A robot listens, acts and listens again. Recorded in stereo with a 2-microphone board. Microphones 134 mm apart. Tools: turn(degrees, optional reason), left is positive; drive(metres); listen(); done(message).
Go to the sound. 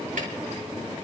listen()
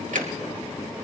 turn(degrees=-90)
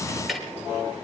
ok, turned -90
drive(metres=1.0)
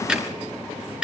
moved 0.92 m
drive(metres=1.0)
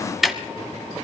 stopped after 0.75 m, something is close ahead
done("I am next to the ticking.")